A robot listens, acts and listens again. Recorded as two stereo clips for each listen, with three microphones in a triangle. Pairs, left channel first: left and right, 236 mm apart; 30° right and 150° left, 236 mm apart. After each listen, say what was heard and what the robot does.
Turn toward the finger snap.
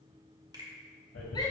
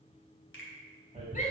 The finger snap: 20° right. Turn 20° right.
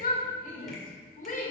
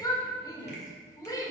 Keep listening.
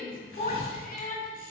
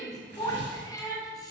Keep listening.
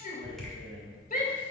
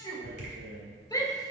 I heard a finger snap from this way, but can't make it out now.